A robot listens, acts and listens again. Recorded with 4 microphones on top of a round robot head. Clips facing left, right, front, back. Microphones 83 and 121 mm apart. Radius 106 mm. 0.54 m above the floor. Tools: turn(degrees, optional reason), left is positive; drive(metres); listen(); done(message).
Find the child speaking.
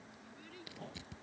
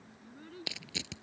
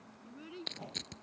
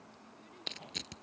turn(degrees=-25, reason="The child speaking: 25° right.")
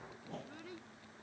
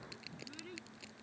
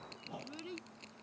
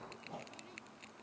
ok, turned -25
turn(degrees=10, reason="The child speaking is now 10° left.")
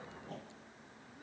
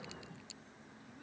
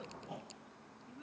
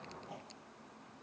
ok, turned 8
listen()
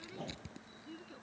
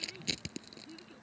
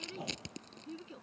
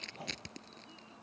turn(degrees=15, reason="The child speaking is now 15° left.")
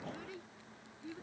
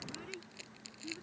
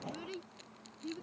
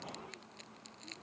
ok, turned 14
turn(degrees=10, reason="The child speaking is now 10° left.")
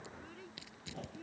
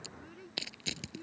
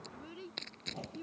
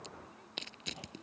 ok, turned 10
done("Found it: a child speaking, straight ahead.")